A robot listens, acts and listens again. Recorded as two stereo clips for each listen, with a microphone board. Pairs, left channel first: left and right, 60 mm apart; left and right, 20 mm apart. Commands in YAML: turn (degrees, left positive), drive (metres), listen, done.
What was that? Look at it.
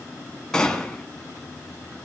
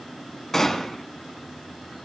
turn: 30
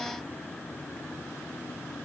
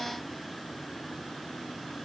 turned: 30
listen: true
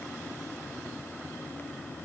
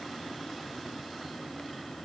done: "I heard a gunshot, but can't make it out now. It was about 20° right or 140° left."